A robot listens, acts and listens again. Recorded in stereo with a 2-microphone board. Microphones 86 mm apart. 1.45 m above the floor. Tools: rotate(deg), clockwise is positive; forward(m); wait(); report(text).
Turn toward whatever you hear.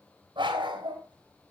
rotate(70)
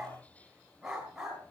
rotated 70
report("Facing the dog barking.")